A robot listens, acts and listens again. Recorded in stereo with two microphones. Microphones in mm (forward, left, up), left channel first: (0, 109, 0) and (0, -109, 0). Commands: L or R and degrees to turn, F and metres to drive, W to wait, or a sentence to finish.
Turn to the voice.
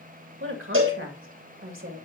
R60
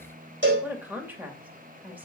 R10
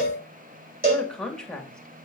Found it: a woman speaking, straight ahead, 2 to 4 m away.